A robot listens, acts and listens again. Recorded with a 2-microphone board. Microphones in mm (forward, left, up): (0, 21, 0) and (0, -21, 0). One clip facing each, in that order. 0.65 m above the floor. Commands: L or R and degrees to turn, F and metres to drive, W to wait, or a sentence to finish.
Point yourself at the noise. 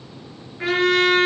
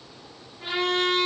L90
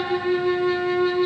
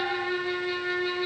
Found it: a trumpet, straight ahead.